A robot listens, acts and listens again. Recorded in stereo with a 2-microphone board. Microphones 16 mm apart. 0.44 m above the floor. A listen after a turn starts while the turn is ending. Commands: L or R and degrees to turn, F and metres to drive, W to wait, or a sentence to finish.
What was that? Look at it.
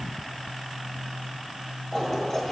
L20
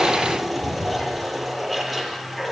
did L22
Found it: a toilet flushing, straight ahead.